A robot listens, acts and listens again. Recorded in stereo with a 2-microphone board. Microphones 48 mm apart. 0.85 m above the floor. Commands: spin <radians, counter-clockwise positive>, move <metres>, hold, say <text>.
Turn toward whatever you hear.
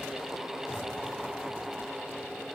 hold
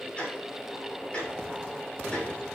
spin 0.44
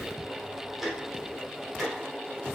say Facing the ticking, 2 to 4 m away.